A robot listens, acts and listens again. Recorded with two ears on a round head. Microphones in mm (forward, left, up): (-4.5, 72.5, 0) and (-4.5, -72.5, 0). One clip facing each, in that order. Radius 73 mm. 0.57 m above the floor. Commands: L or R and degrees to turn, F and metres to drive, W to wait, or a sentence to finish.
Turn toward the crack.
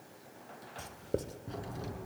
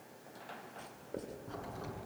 L20
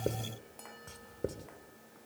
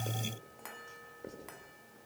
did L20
W
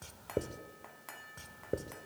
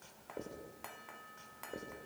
I heard a crack, but can't make it out now. It was about straight ahead or 140° left.